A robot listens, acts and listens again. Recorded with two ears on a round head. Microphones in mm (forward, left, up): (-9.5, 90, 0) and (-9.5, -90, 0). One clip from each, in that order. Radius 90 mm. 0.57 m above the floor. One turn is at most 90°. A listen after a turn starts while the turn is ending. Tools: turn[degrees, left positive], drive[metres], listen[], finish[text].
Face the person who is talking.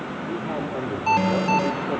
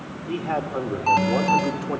Thought: The man speaking: about 45° right or 135° right.
Action: turn[-45]
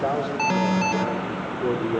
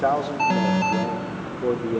Action: finish[Found it: a man speaking, straight ahead, 1 to 2 m away.]